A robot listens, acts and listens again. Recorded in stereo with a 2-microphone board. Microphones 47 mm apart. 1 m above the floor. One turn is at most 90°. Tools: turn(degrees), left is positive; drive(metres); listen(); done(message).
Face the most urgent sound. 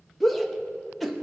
turn(degrees=30)
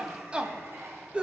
turn(degrees=-25)
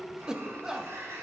turn(degrees=-15)
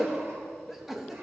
done("Found it: a shout, straight ahead, 1 to 2 m away.")